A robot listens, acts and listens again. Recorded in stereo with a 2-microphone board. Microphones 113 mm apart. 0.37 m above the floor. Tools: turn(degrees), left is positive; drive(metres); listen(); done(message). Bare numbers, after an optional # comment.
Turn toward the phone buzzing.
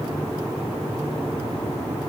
listen()
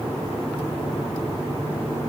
listen()
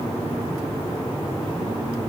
done("I can't make out a phone buzzing to turn to.")